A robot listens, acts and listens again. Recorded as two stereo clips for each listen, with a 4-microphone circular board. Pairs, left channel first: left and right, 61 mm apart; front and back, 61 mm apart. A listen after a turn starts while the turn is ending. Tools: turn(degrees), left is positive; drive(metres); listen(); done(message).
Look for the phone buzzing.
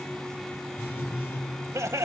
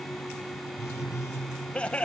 turn(degrees=40)
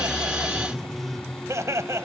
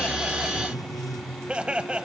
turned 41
done("Found it: a phone buzzing, straight ahead, over 4 m away.")